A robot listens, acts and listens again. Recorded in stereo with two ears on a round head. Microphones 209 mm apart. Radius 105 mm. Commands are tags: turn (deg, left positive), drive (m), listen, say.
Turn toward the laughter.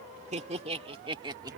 <turn deg="-15"/>
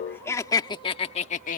<turn deg="35"/>
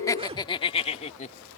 <turn deg="30"/>
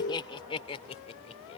<turn deg="25"/>
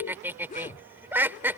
<turn deg="-10"/>
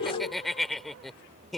<say>Found it: laughter, straight ahead.</say>